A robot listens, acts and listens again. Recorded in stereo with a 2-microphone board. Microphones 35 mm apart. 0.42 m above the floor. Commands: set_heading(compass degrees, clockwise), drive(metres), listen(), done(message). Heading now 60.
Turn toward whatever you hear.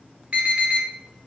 set_heading(100)
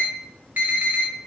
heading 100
set_heading(195)
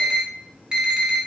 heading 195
set_heading(220)
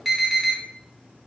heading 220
done("Facing the alarm.")